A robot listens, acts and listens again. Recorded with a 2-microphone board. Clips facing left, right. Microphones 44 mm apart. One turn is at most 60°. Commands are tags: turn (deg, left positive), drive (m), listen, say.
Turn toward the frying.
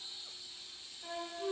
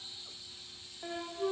<listen/>
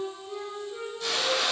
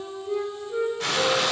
<turn deg="-60"/>
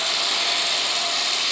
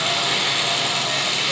<turn deg="-40"/>
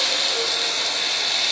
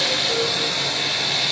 <say>Facing the frying.</say>